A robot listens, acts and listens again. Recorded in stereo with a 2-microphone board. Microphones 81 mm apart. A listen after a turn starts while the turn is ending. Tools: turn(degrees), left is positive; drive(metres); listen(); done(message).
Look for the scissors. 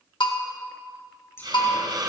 turn(degrees=30)
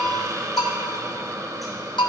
listen()
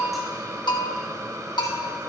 listen()
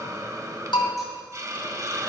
done("I heard scissors, but can't make it out now. It was about straight ahead or 120° left.")